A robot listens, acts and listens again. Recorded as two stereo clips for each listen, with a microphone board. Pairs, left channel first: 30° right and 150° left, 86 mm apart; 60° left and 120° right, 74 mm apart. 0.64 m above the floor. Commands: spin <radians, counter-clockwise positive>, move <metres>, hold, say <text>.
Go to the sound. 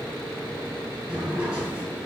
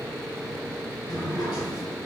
spin 1.31
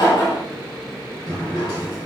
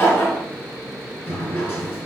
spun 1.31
move 1.0
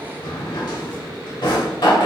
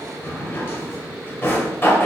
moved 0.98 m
move 1.0
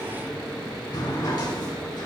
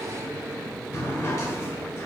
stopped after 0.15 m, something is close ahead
say Arrived at the drawer, straight ahead.